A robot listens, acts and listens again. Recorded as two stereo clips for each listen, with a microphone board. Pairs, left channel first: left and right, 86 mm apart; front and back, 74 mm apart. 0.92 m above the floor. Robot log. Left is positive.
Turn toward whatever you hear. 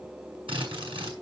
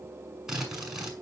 note: The drill: 95° right.
cmd yaw -95
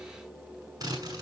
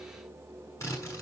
note: The drill is now 45° right.
cmd yaw -45
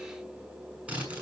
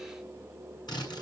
note: The drill is now 15° right.
cmd yaw -15
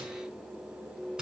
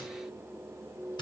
note: The drill is now 10° right.
cmd yaw -10
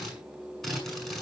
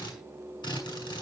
end: Facing the drill, over 4 m away.